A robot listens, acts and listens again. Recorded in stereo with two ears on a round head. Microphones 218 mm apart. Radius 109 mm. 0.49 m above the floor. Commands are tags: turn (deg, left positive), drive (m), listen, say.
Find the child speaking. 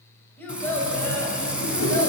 <turn deg="30"/>
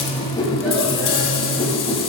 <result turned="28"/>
<listen/>
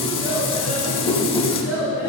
<turn deg="-10"/>
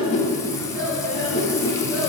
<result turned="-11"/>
<say>Found it: a child speaking, straight ahead, over 4 m away.</say>